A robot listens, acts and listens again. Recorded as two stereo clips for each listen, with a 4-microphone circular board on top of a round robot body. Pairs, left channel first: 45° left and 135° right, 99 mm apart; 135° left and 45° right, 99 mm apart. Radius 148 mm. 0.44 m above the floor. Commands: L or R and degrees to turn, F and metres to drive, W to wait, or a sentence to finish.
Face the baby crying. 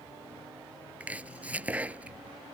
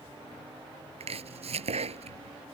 W
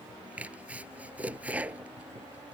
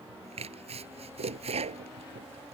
W
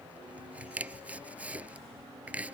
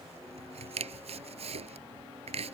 I can't make out a baby crying to turn to.